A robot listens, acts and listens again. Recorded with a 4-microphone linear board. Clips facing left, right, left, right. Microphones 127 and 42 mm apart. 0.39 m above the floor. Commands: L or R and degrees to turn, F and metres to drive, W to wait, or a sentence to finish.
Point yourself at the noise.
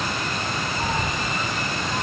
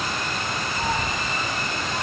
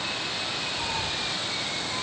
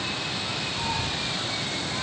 R60
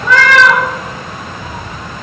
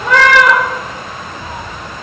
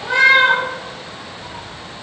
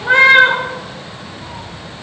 R45
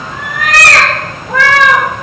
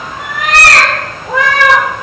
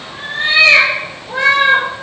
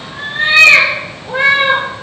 R20
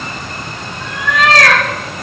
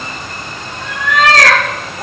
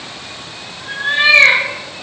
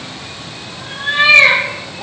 Found it: a cat meowing, straight ahead, over 4 m away.